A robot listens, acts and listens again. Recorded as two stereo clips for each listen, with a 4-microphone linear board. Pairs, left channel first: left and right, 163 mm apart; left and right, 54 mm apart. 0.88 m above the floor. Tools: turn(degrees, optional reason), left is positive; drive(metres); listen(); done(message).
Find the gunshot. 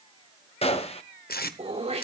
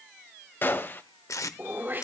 turn(degrees=40, reason="The gunshot: about 40° left or 140° left.")
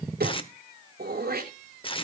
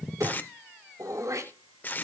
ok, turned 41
listen()
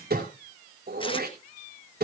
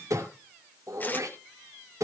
done("I heard a gunshot, but can't make it out now. It was about straight ahead or 100° left.")